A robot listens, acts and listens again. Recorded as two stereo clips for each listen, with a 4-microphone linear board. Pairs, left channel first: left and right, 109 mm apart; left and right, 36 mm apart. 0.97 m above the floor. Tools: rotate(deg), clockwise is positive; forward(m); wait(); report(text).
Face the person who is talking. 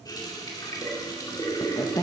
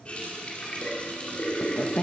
rotate(-30)
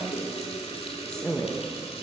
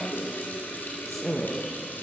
rotate(-10)
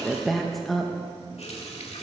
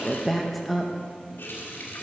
report("Found it: a woman speaking, straight ahead, under 1 m away.")